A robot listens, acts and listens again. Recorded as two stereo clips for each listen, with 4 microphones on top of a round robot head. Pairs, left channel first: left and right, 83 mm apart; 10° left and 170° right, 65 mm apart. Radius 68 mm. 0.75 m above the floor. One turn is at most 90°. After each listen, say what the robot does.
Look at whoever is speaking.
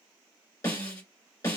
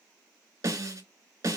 Keep listening.
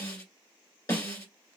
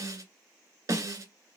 Keep listening.
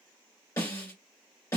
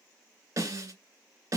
I can't make out anyone speaking, only a snare drum.